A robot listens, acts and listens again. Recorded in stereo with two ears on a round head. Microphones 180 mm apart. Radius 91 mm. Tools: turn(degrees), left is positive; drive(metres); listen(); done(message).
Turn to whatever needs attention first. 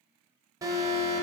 turn(degrees=-20)
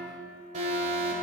turn(degrees=-140)
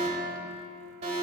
turn(degrees=-35)
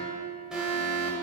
done("Found it: an alarm, straight ahead, 1 to 2 m away.")